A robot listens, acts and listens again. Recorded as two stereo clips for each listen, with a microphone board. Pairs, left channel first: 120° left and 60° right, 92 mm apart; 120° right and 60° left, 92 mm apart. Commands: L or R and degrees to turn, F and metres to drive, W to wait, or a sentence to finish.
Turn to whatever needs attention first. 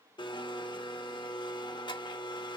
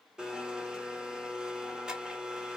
W
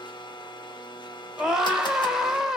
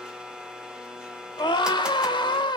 R145
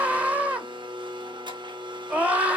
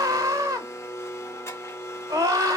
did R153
L10
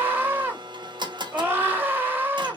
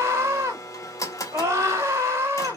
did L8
Found it: a scream, straight ahead, 1 to 2 m away.